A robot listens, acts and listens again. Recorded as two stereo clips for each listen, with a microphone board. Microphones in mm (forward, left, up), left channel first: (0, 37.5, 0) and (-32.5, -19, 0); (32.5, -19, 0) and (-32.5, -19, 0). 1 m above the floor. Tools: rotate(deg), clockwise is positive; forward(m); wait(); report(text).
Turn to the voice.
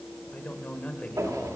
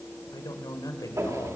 rotate(10)
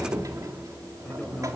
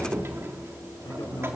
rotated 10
wait()
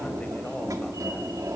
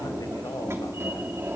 wait()
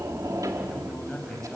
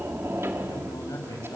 rotate(20)
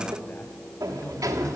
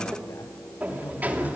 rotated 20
wait()
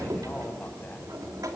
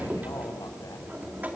wait()
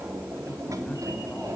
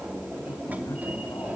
report("I heard a man speaking from this way, but can't make it out now.")